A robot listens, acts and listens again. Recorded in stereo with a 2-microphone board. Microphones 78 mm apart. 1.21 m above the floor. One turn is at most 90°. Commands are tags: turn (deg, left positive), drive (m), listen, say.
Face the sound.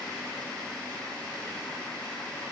<listen/>
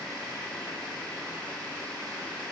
<listen/>
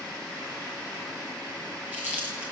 <turn deg="-25"/>
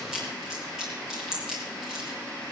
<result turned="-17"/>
<turn deg="-10"/>
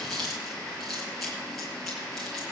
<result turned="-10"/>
<say>Facing the chewing.</say>